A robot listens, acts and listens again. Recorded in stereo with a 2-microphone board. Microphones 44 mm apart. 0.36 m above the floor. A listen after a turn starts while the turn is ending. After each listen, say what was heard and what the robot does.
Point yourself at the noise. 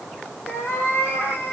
The cat meowing: about 50° left or 130° left. Turn 50° left.
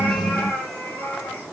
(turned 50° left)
So it is at 90° left. Turn 90° left.
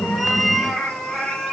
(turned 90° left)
The cat meowing is now 10° left. Turn 10° left.
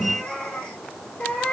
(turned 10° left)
The cat meowing is now 20° left. Turn 20° left.
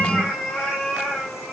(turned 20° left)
Found it: a cat meowing, straight ahead, 2 to 4 m away.